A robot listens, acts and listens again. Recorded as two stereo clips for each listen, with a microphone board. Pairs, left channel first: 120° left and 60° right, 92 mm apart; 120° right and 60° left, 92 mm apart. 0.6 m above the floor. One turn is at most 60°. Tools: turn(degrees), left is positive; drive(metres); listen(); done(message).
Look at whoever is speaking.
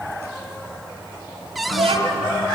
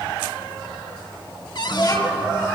turn(degrees=-60)
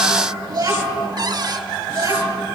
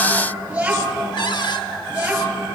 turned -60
turn(degrees=-15)
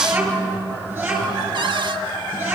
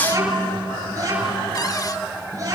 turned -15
done("Found it: a child speaking, straight ahead, over 4 m away.")